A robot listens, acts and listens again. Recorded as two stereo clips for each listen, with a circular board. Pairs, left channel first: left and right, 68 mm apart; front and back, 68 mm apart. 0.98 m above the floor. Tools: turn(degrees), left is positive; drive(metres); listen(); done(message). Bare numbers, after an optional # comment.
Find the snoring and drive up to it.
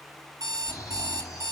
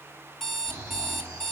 # The snoring: 125° left.
turn(125)
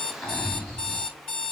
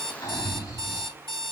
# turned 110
# The snoring is now 15° left.
turn(15)
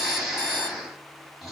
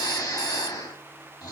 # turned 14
drive(1.0)
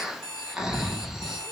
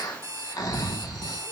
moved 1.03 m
# The snoring is now 10° right.
turn(-10)
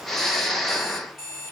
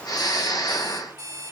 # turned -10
drive(1.0)
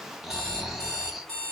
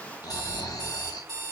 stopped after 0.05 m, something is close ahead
done("Arrived at the snoring, straight ahead.")